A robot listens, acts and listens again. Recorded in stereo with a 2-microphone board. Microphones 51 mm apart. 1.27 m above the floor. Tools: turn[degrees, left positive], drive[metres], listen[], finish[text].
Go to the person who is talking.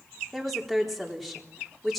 Action: turn[30]
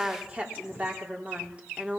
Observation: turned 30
Thought: So it is at 25° right.
Action: turn[-25]
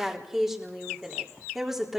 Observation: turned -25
Action: drive[1.0]
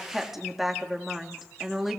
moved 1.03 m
Action: drive[1.0]
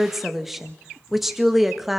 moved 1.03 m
Action: drive[1.0]
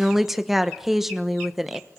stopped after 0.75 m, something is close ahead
Action: finish[Arrived at the woman speaking, straight ahead.]